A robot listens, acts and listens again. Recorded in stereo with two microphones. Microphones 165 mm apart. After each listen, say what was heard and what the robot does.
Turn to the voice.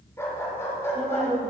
The woman speaking: about 65° right or 115° right. Turn 65° right.
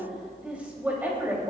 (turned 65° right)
So it is at 15° right. Turn 15° right.
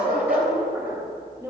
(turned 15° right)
The woman speaking is now 20° right. Turn 20° right.
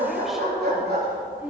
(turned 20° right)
The woman speaking is now 10° right. Turn 10° right.
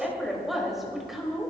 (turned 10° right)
Facing the woman speaking.